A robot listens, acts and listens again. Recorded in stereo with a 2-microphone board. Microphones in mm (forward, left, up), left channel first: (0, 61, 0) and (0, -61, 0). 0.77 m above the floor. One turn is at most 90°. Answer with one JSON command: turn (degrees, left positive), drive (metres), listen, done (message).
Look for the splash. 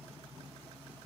{"listen": true}
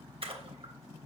{"turn": -50}
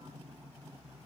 {"listen": true}
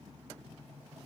{"done": "I heard a splash, but can't make it out now. It was about straight ahead or 80° right."}